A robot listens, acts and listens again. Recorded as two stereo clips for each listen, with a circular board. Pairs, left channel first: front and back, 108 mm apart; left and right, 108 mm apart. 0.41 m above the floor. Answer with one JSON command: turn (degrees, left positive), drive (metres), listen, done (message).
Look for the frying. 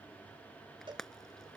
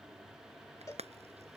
{"turn": -85}
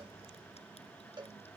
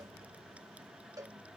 {"listen": true}
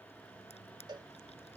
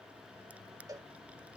{"listen": true}
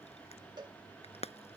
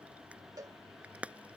{"turn": -15}
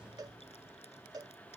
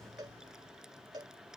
{"listen": true}
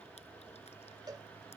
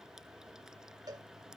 {"listen": true}
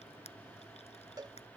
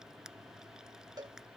{"done": "Facing where the frying came from. I can't hear it now."}